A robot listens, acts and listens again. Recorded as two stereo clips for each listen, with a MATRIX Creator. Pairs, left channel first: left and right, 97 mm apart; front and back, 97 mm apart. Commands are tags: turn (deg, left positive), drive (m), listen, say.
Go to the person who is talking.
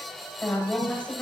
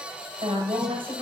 <turn deg="165"/>
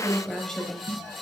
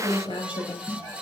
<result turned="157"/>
<turn deg="10"/>
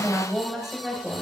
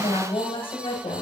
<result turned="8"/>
<drive m="1.0"/>
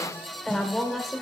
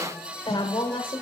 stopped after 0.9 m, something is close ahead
<say>Arrived at the woman speaking, straight ahead.</say>